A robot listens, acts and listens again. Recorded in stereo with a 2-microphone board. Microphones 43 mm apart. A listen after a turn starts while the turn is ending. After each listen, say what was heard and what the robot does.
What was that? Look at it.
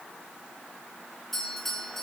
Turn 30° left.
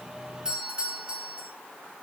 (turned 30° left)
So it is at 25° right. Turn 25° right.
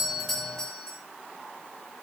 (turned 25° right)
The doorbell is now 15° left. Turn 15° left.
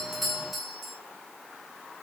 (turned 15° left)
Facing the doorbell.